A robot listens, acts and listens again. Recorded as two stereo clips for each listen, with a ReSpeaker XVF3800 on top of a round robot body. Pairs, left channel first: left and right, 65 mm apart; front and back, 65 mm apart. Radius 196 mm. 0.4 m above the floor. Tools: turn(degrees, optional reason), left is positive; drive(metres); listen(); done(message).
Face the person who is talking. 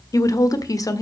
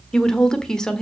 turn(degrees=80, reason="The woman speaking: 80° left.")
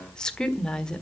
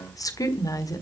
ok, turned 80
turn(degrees=15, reason="The woman speaking is now 15° left.")
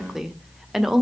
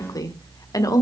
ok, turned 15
done("Found it: a woman speaking, straight ahead, 1 to 2 m away.")